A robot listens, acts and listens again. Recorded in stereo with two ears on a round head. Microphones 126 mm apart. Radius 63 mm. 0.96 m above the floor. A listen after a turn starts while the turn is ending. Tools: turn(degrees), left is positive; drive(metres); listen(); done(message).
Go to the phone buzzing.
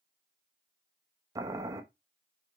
listen()
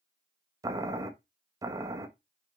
listen()
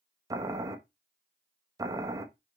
done("I can't make out a phone buzzing to turn to.")